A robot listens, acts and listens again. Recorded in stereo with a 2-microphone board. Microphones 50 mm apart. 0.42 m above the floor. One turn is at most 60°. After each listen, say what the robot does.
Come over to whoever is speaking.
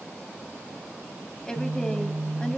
Turn 30° left.
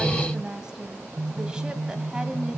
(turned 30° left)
Turn 15° right.
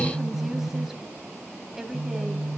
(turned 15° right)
Drive 1.0 m forward.
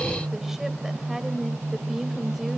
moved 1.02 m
Keep listening.
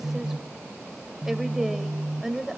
Drive 1.0 m forward.
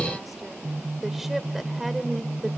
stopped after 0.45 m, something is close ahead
I am next to the woman speaking.